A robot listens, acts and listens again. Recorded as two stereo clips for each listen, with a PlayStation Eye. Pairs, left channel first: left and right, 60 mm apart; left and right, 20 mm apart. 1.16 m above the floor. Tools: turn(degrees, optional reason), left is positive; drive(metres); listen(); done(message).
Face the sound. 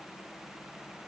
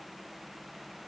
listen()
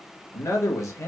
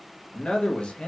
turn(degrees=65, reason="The man speaking: about 65° left or 115° left.")
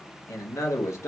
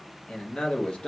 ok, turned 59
turn(degrees=55, reason="So it is at 55° left.")
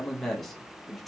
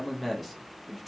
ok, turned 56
done("Facing the man speaking, under 1 m away.")